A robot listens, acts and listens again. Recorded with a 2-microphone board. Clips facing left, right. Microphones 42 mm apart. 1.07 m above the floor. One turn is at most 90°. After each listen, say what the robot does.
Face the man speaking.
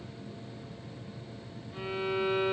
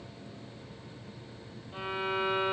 Keep listening.
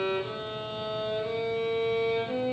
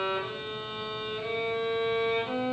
Keep listening.
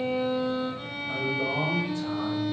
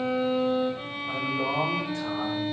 Turn 70° right.
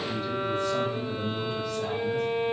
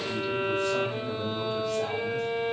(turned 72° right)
Turn 30° right.
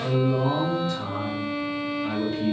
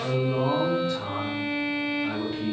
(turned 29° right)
Found it: a man speaking, straight ahead, 2 to 4 m away.